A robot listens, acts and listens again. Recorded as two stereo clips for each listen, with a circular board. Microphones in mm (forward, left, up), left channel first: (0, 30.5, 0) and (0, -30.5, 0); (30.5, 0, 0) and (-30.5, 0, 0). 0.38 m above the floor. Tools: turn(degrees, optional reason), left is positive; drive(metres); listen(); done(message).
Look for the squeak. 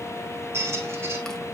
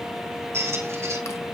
turn(degrees=-135, reason="The squeak: 135° right.")
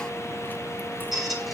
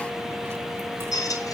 done("Found it: a squeak, straight ahead.")